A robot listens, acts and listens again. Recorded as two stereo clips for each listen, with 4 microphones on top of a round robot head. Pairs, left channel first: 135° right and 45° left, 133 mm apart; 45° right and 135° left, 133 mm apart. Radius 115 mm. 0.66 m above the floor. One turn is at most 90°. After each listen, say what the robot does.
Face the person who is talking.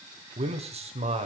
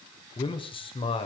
Found it: a man speaking, straight ahead, 2 to 4 m away.